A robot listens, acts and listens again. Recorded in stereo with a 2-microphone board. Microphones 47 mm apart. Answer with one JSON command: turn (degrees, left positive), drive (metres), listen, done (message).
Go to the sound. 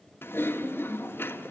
{"turn": 50}
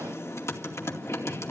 {"turn": 80}
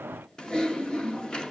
{"turn": 20}
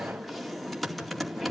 {"drive": 1.0}
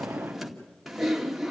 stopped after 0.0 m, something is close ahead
{"done": "Something is in my way. I am facing the typing on a keyboard but have not reached it."}